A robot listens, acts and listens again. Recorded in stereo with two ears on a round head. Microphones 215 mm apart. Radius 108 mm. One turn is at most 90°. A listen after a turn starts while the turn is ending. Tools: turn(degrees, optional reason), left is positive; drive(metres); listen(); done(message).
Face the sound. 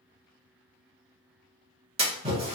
turn(degrees=-25, reason="The splash: about 25° right or 155° right.")
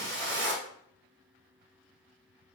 turn(degrees=-90, reason="So it is at 130° right.")
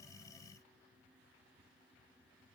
turn(degrees=-40, reason="Nothing new. It was at 40° right.")
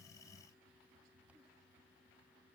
done("Facing where the splash came from. I can't hear it now.")